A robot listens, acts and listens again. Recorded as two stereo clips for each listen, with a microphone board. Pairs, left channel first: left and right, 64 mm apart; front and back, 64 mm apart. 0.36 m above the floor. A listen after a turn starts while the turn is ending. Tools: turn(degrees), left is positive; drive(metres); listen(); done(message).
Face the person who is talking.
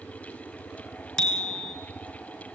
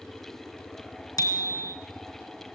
listen()
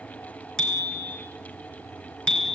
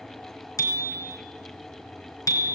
listen()
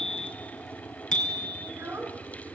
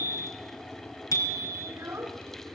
turn(degrees=-135)
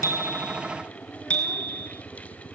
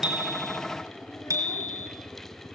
listen()
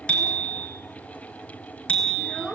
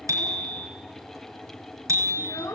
turn(degrees=10)
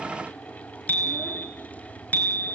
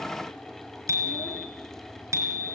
listen()
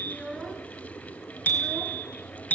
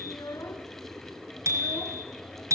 done("Found it: a child speaking, straight ahead, 2 to 4 m away.")